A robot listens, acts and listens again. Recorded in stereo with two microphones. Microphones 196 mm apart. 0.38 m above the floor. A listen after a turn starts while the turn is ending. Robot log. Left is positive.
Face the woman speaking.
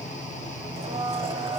cmd idle
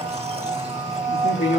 note: The woman speaking: about 70° left or 110° left.
cmd yaw +70
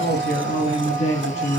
note: So it is at 35° left.
cmd yaw +35
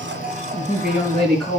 end: Found it: a woman speaking, straight ahead, over 4 m away.